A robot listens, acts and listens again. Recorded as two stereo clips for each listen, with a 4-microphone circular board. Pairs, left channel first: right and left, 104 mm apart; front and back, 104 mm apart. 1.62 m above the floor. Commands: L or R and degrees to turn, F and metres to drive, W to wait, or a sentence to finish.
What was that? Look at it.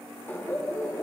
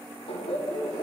R20
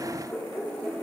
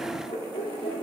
R10
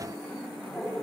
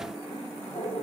Found it: laughter, straight ahead, over 4 m away.